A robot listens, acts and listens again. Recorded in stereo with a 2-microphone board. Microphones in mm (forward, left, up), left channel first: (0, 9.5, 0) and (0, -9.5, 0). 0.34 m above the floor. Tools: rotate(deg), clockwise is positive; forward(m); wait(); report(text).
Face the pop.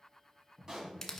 rotate(35)
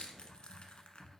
wait()
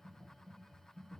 report("I heard a pop, but can't make it out now. It was about straight ahead or 110° right.")